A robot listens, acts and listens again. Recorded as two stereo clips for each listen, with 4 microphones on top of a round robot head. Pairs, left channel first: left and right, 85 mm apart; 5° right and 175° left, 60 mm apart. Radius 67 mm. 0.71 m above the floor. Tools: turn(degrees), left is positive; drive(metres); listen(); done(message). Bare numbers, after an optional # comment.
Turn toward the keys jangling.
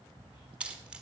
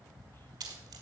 # The keys jangling: 165° right.
turn(-165)
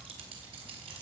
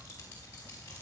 # The keys jangling is now 65° right.
turn(-65)
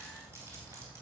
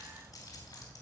# The keys jangling is now 25° right.
turn(-25)
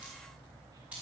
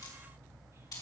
# The keys jangling is now 15° right.
turn(-15)
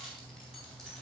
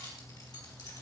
done("Found it: keys jangling, straight ahead, over 4 m away.")